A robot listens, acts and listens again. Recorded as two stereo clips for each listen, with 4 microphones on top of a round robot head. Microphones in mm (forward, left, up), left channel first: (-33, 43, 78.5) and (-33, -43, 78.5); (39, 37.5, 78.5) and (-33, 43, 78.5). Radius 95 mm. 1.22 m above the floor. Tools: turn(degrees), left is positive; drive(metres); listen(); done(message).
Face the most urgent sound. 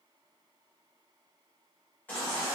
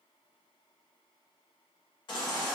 turn(degrees=15)
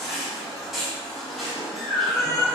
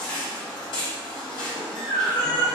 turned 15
done("Found it: a baby crying, straight ahead.")